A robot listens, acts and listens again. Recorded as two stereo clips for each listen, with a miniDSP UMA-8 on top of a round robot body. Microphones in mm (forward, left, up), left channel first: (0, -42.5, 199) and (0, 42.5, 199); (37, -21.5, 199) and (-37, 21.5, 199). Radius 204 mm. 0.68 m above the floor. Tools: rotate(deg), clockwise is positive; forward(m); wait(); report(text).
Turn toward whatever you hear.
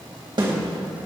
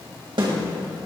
rotate(-125)
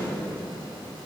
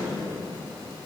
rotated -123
wait()
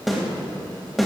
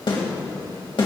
report("Found it: a snare drum, straight ahead.")